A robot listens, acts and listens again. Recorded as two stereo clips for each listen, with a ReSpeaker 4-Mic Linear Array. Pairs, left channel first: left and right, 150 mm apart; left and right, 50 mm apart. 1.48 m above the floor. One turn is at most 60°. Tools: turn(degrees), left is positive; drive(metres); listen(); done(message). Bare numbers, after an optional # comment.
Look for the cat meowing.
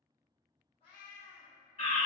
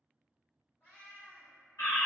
# The cat meowing: about 45° left or 135° left.
turn(45)
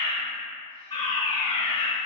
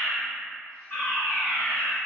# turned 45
listen()
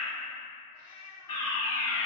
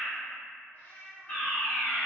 # The cat meowing: about 45° left or 135° left.
turn(45)
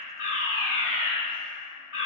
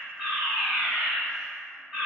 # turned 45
listen()
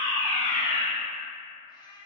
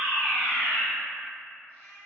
# So it is at 35° left.
turn(35)
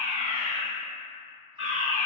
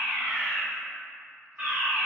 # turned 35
listen()
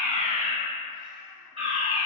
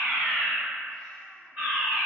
listen()
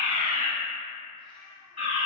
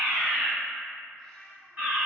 done("Found it: a cat meowing, straight ahead.")